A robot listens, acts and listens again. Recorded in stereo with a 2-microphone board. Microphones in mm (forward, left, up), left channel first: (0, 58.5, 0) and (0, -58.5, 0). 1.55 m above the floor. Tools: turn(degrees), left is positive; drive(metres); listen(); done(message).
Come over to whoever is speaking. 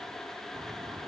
listen()
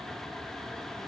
listen()
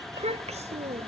turn(degrees=-75)
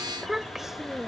drive(metres=1.0)
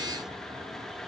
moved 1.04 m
listen()
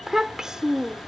drive(metres=1.0)
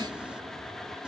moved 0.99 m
listen()
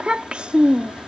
turn(degrees=-10)
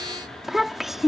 drive(metres=1.0)
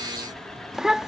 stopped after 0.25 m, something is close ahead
done("I am next to the child speaking.")